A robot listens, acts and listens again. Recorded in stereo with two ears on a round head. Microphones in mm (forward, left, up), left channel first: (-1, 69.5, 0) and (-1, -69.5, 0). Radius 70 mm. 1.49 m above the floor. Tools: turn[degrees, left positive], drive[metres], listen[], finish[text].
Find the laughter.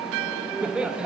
Action: turn[-30]
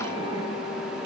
Action: listen[]
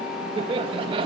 Thought: So it is at 145° right.
Action: turn[-145]
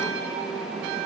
Action: listen[]
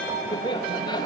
Thought: The laughter is now 25° left.
Action: turn[25]
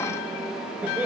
Thought: The laughter is now 10° right.
Action: turn[-10]
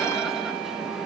Action: listen[]
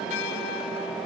Action: listen[]
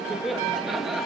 Action: finish[Found it: laughter, straight ahead, 2 to 4 m away.]